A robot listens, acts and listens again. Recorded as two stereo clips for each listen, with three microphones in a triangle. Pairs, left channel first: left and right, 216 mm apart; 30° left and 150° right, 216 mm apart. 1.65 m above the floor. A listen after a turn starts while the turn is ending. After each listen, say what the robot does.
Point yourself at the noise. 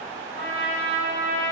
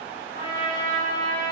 Turn 105° right.
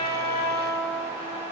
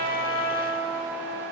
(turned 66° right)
Turn 40° right.
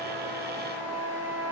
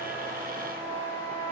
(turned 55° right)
Turn 15° left.
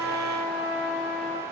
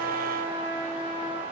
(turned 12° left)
Found it: a trumpet, straight ahead, 2 to 4 m away.